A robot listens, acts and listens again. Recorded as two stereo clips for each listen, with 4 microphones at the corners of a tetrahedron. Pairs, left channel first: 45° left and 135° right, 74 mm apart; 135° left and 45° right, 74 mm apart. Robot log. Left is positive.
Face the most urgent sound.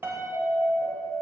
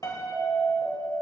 note: The alarm: 45° left.
cmd yaw +45
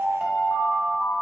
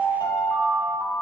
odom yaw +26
note: The alarm is now 20° left.
cmd yaw +20
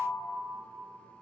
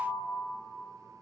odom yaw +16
end: Found it: an alarm, straight ahead.